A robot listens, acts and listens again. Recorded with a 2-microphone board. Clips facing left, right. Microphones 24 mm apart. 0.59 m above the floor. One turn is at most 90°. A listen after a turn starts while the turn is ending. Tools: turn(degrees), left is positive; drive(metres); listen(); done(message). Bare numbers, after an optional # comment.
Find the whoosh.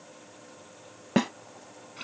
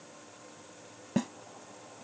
listen()
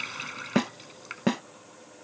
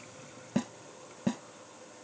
listen()
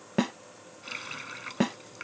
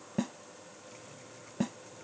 done("I can't make out a whoosh to turn to.")